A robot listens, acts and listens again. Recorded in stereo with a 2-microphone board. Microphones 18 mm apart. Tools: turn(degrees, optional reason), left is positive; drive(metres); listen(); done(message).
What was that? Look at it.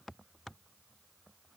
listen()
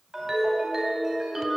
turn(degrees=-30, reason="The ringtone: about 30° right or 150° right.")
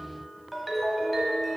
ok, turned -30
done("Facing the ringtone.")